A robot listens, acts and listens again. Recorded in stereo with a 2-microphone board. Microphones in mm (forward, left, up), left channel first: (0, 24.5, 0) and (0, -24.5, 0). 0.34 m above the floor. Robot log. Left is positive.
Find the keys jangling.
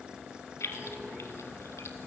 note: The keys jangling: about 75° left or 105° left.
cmd yaw +75
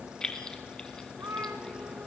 note: So it is at 15° left.
cmd yaw +15
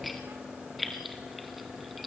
end: Facing the keys jangling, 1 to 2 m away.